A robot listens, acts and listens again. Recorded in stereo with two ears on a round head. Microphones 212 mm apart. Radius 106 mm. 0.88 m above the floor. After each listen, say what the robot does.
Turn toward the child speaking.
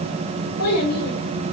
Turn 70° left.
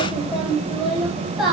Found it: a child speaking, straight ahead, over 4 m away.